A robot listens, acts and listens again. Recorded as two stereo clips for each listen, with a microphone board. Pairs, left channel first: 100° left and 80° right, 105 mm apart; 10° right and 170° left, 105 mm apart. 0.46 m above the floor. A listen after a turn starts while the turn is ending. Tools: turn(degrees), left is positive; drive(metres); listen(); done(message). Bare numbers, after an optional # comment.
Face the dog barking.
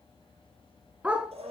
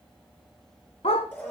done("Found it: a dog barking, straight ahead.")